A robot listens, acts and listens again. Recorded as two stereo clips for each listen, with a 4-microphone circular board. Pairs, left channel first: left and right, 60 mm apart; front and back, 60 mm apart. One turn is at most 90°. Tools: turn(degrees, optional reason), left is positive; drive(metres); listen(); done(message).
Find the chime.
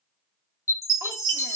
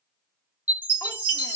turn(degrees=90, reason="The chime: 125° left.")
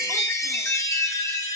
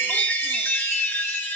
turn(degrees=55, reason="The chime is now 55° left.")
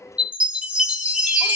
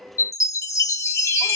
turn(degrees=-20, reason="The chime is now 20° right.")
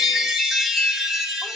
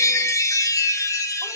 done("Facing the chime.")